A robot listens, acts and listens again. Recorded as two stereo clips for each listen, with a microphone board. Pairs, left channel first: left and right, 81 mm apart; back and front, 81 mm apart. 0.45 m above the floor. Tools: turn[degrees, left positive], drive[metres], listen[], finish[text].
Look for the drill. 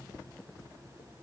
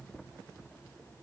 Action: listen[]
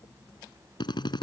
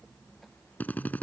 Thought: The drill: 110° left.
Action: turn[110]
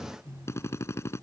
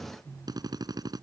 Thought: The drill is now 35° left.
Action: turn[35]
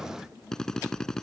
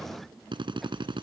Action: finish[Found it: a drill, straight ahead.]